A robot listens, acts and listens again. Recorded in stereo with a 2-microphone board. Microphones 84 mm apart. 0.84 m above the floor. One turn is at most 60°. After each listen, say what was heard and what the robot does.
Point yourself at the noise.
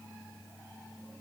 Keep listening.
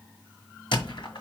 Turn 60° left.
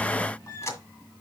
So it is at 35° left. Turn 35° left.
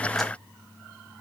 Keep listening.
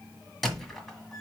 Facing the squeak, 1 to 2 m away.